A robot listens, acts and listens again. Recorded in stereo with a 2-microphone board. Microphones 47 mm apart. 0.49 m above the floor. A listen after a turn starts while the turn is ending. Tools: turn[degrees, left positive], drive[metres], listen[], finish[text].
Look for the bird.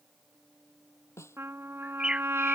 Thought: The bird: about 15° right or 165° right.
Action: turn[-15]
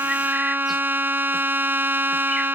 Action: listen[]
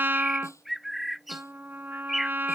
Action: finish[Facing the bird.]